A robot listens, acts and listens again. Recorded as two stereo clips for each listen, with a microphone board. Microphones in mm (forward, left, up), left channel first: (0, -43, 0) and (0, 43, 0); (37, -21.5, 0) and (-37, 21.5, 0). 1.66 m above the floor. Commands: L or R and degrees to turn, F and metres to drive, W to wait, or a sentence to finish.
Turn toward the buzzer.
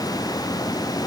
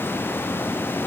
W
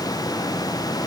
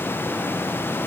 W
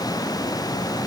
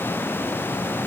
I can't make out a buzzer.